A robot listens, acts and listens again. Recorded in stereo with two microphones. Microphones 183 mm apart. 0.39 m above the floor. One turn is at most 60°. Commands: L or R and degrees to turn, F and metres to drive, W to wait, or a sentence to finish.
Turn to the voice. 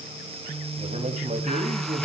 R45
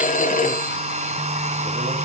W
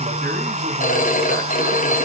W
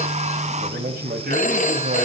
R60
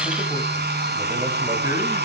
R25
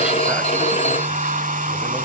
W
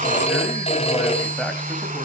W
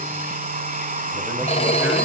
Facing where the man speaking came from. I can't hear it now.